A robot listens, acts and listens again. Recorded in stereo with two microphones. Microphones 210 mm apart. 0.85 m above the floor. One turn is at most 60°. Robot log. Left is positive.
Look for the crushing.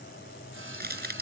note: The crushing: about 50° right or 130° right.
cmd yaw -50
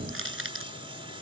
note: So it is at 80° right.
cmd yaw -60
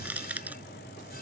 end: Found it: crushing, straight ahead.